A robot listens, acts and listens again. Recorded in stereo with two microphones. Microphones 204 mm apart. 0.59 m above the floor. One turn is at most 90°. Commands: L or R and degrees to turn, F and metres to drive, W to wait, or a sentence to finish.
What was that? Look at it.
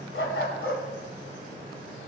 L90
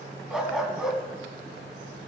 Facing the dog barking.